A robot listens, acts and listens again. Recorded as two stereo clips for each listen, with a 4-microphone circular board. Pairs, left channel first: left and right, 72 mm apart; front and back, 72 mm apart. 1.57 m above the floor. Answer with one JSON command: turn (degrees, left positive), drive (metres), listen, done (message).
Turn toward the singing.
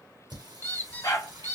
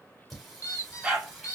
{"turn": -95}
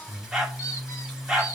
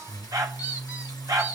{"done": "Found it: singing, straight ahead."}